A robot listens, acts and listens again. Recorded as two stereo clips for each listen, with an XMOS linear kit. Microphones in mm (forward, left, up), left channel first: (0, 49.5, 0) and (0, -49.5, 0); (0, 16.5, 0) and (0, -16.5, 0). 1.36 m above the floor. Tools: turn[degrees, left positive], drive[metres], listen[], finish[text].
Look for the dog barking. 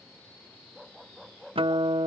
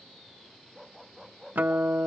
Action: turn[30]
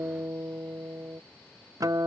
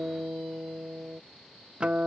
Action: listen[]
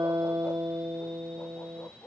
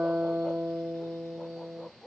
Thought: So it is at 155° left.
Action: turn[155]
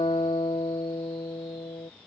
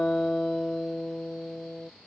Action: listen[]
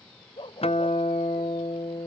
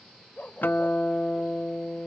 Thought: The dog barking is now 60° left.
Action: turn[60]
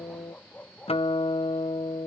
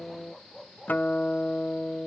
Thought: The dog barking is now 20° left.
Action: turn[20]
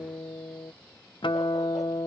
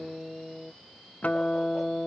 Action: listen[]
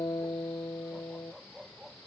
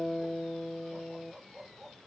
Action: finish[Facing the dog barking.]